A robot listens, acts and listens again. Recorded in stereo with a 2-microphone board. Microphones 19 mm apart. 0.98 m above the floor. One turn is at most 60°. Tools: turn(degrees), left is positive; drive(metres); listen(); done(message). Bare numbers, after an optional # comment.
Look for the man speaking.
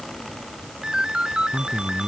# The man speaking: about 25° left or 155° left.
turn(25)
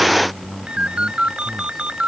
done("Facing the man speaking.")